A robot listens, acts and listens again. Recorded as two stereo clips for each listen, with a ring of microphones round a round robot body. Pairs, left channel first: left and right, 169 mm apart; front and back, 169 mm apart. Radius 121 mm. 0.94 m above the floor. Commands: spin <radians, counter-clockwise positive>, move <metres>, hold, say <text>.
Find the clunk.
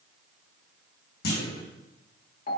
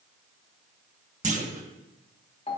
spin 2.36
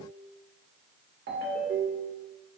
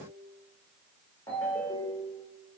say Facing where the clunk came from. I can't hear it now.